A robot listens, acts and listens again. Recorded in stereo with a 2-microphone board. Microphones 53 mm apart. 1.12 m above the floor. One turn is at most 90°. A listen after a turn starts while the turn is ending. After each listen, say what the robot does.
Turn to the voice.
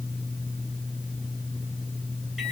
Keep listening.
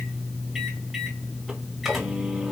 Keep listening.
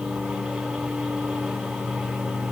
I can't make out anyone speaking to turn to.